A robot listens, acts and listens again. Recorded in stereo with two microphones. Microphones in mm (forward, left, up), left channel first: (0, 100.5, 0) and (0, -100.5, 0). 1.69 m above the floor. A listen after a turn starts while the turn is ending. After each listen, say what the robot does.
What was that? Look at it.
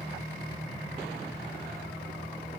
Keep listening.
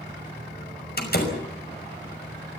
Turn 50° left.
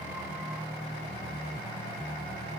Keep listening.
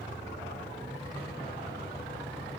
I heard a door slam, but can't make it out now. It was about straight ahead or 80° left.